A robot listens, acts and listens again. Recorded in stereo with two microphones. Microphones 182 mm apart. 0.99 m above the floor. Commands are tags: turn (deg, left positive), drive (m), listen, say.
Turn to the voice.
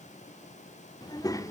<turn deg="15"/>
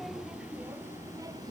<turn deg="-20"/>
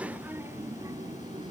<turn deg="-25"/>
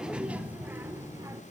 <turn deg="-15"/>
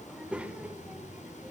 <say>Facing the child speaking, 1 to 2 m away.</say>